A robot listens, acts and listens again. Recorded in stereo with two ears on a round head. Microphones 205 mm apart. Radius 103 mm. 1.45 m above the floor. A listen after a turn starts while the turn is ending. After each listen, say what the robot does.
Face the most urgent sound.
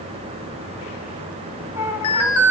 Turn 70° left.
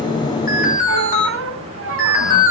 Turn 35° left.
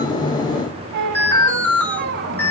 Turn 10° left.
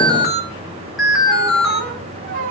Facing the alarm.